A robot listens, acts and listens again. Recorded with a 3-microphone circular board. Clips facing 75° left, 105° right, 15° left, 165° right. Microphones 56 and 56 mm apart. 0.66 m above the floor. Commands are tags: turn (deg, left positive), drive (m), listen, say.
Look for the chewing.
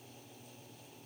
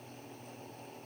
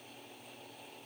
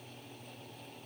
<listen/>
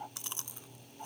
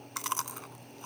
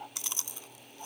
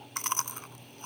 <turn deg="-125"/>
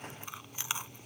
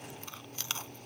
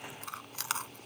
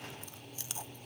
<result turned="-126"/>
<say>Facing the chewing.</say>